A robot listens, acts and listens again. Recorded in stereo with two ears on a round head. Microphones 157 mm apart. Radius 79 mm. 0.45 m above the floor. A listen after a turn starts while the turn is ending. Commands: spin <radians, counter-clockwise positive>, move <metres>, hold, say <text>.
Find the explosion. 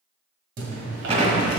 spin -0.70
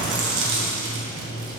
hold
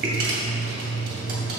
say I heard an explosion, but can't make it out now. It was about straight ahead or 100° right.